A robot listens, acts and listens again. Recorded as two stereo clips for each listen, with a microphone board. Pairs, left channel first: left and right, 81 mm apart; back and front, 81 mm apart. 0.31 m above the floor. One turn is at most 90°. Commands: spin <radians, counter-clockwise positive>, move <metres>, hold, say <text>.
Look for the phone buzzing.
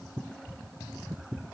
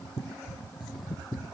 hold
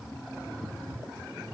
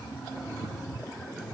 hold
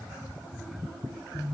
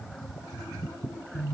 spin 1.40
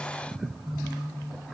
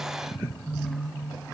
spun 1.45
say Facing the phone buzzing, over 4 m away.